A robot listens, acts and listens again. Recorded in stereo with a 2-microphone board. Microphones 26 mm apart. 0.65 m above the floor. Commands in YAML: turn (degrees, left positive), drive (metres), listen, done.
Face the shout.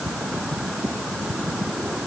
listen: true
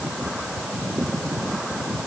listen: true
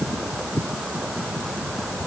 done: "I can't make out a shout to turn to."